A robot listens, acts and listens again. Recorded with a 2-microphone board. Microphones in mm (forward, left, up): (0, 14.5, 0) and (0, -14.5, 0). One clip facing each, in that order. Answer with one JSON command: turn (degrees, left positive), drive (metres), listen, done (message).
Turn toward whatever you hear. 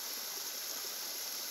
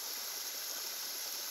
{"listen": true}
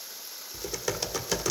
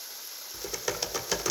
{"turn": -30}
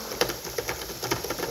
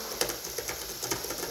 {"turn": 25}
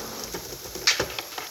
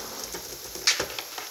{"done": "Facing the typing on a keyboard, 1 to 2 m away."}